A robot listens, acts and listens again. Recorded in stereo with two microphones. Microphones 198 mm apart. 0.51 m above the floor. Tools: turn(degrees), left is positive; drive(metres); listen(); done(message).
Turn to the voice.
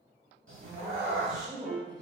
turn(degrees=30)
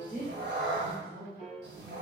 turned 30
turn(degrees=130)
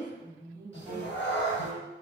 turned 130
turn(degrees=-45)
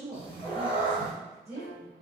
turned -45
turn(degrees=-15)
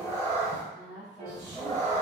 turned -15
done("Facing the woman speaking, 1 to 2 m away.")